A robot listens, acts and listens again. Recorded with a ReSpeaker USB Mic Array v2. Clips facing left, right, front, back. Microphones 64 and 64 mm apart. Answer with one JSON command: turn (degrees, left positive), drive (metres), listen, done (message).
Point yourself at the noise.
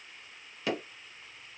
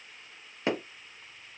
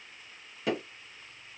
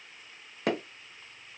{"turn": -150}
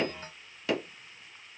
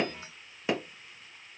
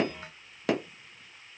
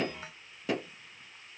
{"turn": -20}
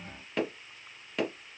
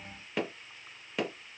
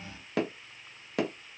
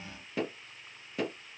{"done": "Facing the hammering, under 1 m away."}